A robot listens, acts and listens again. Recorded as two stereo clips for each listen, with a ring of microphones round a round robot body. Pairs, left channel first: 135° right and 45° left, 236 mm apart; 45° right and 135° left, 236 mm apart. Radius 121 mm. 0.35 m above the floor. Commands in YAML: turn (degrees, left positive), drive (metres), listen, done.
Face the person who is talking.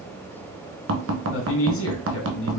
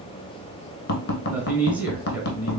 turn: -140
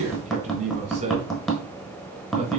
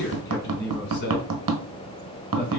turn: -10
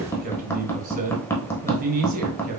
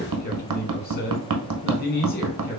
done: "Facing the man speaking, 1 to 2 m away."